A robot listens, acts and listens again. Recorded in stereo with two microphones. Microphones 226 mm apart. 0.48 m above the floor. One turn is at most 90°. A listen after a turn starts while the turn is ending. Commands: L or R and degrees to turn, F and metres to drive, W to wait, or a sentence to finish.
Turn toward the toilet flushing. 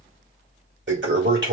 R55
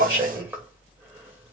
R10
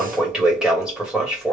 Facing the toilet flushing.